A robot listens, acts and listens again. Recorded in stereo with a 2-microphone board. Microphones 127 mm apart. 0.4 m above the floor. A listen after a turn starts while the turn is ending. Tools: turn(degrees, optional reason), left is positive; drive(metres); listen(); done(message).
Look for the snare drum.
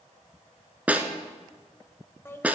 turn(degrees=-30)
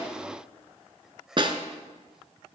turn(degrees=-140, reason="So it is at 140° right.")
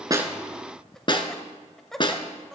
turn(degrees=40, reason="The snare drum is now 40° left.")
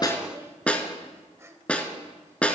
turn(degrees=10, reason="The snare drum is now 10° left.")
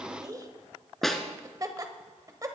done("Found it: a snare drum, straight ahead, 1 to 2 m away.")